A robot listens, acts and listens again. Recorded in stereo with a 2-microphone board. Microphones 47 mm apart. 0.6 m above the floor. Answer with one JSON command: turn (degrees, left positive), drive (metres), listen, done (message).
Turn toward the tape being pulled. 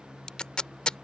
{"turn": 20}
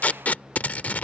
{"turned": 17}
{"turn": 145}
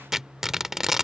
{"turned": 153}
{"turn": -10}
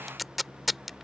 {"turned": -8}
{"done": "Found it: tape being pulled, straight ahead."}